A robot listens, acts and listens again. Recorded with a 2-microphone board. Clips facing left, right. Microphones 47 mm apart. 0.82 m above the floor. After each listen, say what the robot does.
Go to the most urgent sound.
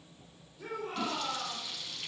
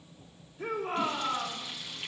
Turn 30° right.
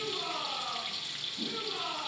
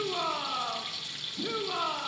Turn 120° right.
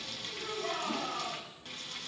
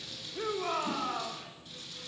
Turn 60° right.
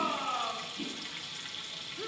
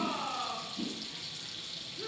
Turn 15° left.
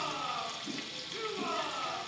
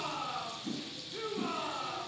Drive 1.0 m forward.
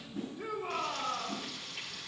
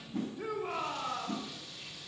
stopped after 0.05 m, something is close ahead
Turn 10° right.
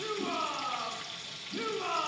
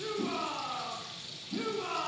Blocked. The shout is further on, straight ahead.